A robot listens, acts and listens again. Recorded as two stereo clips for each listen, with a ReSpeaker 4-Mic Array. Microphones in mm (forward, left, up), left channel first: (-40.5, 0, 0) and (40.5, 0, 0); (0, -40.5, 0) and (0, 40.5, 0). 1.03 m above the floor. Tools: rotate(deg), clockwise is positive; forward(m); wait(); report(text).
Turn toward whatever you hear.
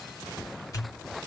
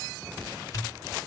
rotate(140)
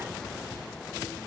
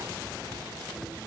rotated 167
rotate(-30)
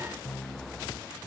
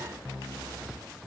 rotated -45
rotate(15)
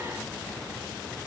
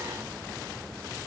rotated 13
report("I heard a pop from this way, but can't make it out now.")